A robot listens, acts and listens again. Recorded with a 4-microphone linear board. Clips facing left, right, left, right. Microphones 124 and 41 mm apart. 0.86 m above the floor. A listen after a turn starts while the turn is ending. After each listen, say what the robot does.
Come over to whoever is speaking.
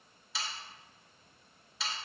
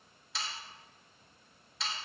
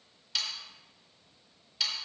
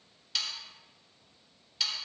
Keep listening.
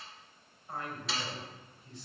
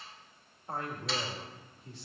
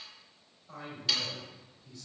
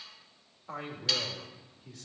Turn 70° right.
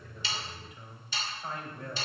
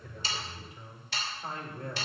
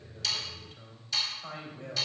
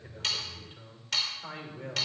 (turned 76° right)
Turn 35° right.
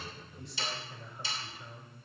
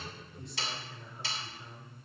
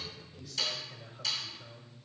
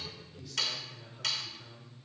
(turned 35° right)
Drive 1.0 m forward.
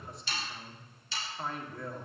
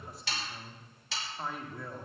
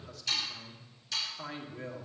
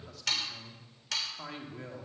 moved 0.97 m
Drive 1.0 m forward.
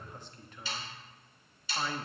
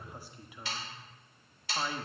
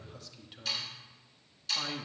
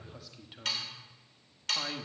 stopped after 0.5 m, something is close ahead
Turn 10° right.
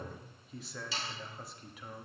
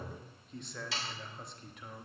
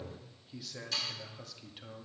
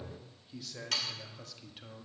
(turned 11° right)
I am next to the man speaking.